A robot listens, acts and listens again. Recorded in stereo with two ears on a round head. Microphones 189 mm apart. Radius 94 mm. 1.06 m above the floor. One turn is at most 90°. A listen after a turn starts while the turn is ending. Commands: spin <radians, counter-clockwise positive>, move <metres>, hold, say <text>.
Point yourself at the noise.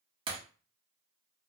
spin -0.44
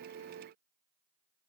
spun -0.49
hold
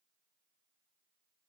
say I heard breaking glass, but can't make it out now. It was about straight ahead or 125° right.